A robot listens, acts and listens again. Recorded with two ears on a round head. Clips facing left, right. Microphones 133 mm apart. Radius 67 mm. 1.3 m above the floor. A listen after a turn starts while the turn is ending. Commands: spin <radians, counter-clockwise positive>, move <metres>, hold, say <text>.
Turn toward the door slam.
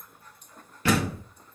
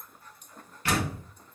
spin 1.22
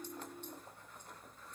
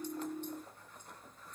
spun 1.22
hold
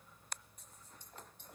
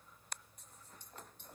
say I heard a door slam, but can't make it out now. It was about straight ahead or 40° left.